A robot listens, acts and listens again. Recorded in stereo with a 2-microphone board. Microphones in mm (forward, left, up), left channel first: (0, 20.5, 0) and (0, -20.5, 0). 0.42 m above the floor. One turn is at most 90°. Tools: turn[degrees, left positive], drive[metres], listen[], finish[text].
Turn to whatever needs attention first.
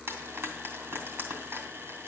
Action: listen[]
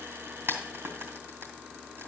Action: listen[]
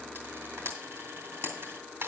Action: finish[I can't make out anything urgent, only frying.]